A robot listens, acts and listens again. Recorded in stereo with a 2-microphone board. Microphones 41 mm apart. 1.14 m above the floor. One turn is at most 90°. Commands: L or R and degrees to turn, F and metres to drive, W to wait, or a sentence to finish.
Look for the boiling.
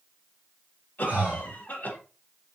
W
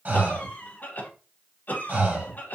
W
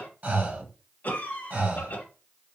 I can't make out boiling to turn to.